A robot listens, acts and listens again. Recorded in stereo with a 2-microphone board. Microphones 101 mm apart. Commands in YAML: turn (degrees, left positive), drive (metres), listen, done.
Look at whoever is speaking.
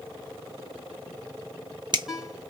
listen: true
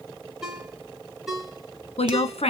turn: 90
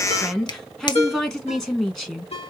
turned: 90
done: "Facing the woman speaking, 1 to 2 m away."